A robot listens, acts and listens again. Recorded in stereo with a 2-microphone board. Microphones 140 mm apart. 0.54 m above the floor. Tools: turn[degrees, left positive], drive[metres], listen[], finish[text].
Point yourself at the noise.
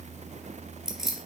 Action: turn[-30]
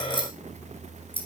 Thought: So it is at 40° left.
Action: turn[40]
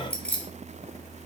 Thought: The keys jangling is now 10° left.
Action: turn[10]
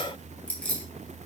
Thought: The keys jangling is now 10° left.
Action: turn[10]
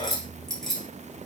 Action: finish[Found it: keys jangling, straight ahead.]